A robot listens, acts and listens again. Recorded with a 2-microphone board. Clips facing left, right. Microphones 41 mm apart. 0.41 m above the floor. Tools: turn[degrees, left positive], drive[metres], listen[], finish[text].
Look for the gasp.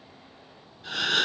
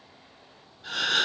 Action: turn[30]
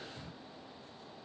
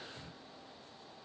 Action: listen[]
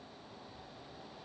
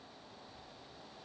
Action: finish[I heard a gasp, but can't make it out now. It was about 30° right or 150° left.]